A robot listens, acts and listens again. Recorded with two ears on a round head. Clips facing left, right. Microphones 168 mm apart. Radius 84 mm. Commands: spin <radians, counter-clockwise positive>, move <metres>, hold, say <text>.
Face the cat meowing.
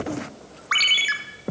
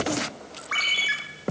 hold
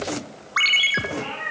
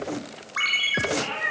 spin -0.70
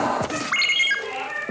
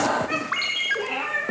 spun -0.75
spin -1.66
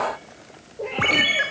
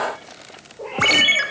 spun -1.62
spin 0.35
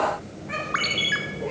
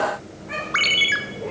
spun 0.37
say Facing the cat meowing, 2 to 4 m away.